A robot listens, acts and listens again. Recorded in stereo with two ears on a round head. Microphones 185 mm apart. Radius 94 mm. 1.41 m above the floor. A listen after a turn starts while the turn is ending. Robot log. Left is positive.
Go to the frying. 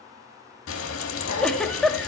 note: The frying: about 70° left or 110° left.
cmd yaw +70
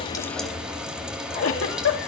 cmd fwd 1.0
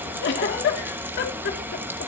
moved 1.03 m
note: The frying is now 10° right.
cmd yaw -10
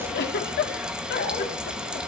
cmd fwd 1.0
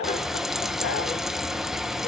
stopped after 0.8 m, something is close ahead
end: Arrived at the frying, straight ahead.